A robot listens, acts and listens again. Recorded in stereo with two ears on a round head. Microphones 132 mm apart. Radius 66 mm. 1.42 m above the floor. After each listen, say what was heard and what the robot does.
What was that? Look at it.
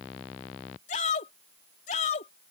The shout: about 50° left or 130° left. Turn 50° left.
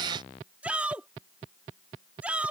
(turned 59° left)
So it is at 10° right. Turn 10° right.
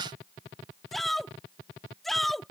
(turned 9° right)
Facing the shout.